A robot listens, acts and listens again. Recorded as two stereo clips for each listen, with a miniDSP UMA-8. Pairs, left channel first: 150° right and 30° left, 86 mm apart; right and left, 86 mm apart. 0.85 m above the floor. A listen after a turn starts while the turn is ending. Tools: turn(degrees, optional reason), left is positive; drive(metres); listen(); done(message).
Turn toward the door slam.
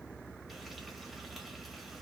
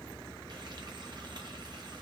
listen()
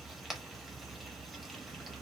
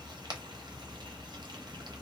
listen()
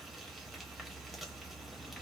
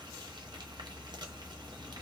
done("I can't make out a door slam.")